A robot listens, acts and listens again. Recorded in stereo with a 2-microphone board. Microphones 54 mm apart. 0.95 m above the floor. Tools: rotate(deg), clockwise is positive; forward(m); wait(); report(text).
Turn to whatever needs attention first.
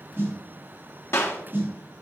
wait()
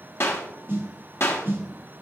wait()
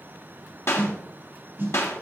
report("I can't make out anything urgent to turn to.")